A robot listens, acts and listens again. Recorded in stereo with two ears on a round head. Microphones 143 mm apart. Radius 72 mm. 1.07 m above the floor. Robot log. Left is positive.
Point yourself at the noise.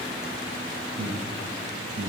cmd yaw -90
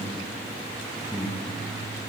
end: Facing the breathing.